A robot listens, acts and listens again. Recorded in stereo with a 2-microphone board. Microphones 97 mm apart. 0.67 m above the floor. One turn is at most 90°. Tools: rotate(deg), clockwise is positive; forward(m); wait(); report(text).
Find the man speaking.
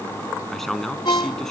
rotate(-30)
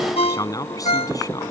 rotate(-90)
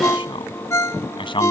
rotate(-60)
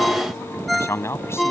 rotate(-25)
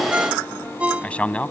rotate(-10)
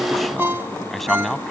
report("Facing the man speaking.")